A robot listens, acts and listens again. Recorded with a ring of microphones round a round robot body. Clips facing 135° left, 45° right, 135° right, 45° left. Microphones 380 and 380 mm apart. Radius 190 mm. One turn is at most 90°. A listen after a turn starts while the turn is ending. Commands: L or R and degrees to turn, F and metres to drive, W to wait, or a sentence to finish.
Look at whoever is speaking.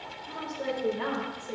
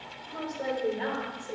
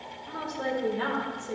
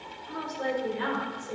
R90
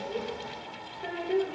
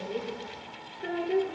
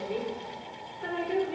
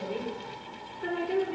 L25
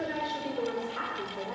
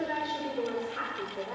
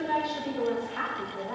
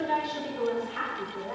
L60
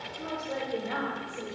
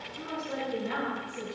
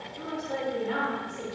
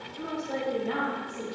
L25
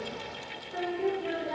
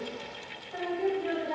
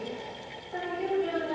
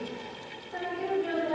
R15
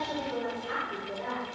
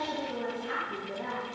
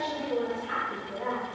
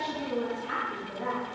Found it: a woman speaking, straight ahead, 2 to 4 m away.